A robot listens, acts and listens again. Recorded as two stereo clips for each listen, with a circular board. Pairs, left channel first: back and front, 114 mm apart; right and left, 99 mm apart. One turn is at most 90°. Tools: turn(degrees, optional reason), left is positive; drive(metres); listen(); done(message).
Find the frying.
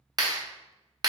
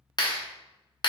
listen()
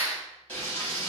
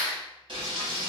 turn(degrees=90, reason="The frying: 105° left.")
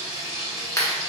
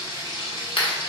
turn(degrees=40, reason="The frying is now 40° left.")
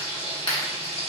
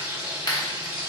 turn(degrees=25, reason="The frying is now 25° left.")
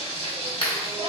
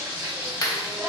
turn(degrees=15, reason="The frying is now 15° left.")
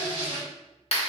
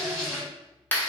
done("Facing the frying, 1 to 2 m away.")